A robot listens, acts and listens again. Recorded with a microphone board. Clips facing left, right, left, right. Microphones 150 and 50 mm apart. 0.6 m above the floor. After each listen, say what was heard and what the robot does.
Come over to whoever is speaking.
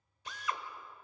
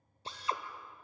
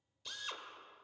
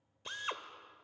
Keep listening.
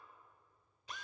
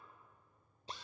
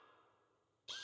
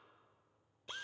Keep listening.
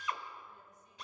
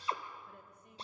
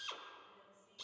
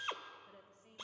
The woman speaking: about 65° right or 115° right. Turn 65° right.
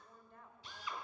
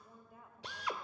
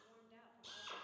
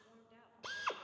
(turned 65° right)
Drive 1.0 m forward.
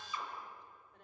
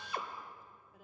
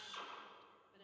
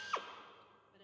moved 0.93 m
Drive 1.0 m forward.
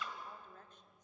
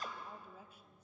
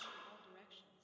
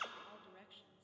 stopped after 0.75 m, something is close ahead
The woman speaking is now 10° right. Turn 10° right.
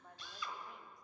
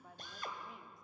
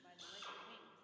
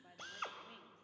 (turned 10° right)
I am next to the woman speaking.